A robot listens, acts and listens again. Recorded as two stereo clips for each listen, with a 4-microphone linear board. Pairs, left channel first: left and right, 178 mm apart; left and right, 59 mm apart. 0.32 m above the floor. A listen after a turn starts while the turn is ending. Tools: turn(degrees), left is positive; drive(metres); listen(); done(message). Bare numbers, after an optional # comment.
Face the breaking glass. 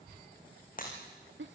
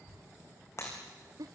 # The breaking glass: about 50° left or 130° left.
turn(50)
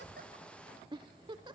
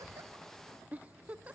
listen()
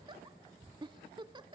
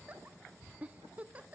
done("I heard breaking glass, but can't make it out now. It was about straight ahead or 80° left.")